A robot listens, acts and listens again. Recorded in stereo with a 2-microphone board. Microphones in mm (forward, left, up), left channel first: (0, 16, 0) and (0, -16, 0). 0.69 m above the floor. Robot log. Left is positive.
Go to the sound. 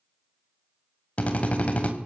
note: The drill: about 40° left or 140° left.
cmd yaw +40
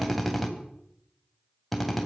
cmd fwd 1.0
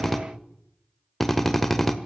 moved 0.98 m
cmd fwd 1.0
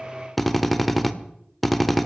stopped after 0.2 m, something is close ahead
end: I am next to the drill.